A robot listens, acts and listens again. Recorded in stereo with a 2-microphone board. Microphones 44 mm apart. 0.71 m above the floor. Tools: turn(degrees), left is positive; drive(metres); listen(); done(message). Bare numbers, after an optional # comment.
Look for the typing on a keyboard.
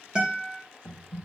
turn(30)
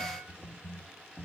# So it is at 20° right.
turn(-20)
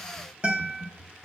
done("Facing the typing on a keyboard, 1 to 2 m away.")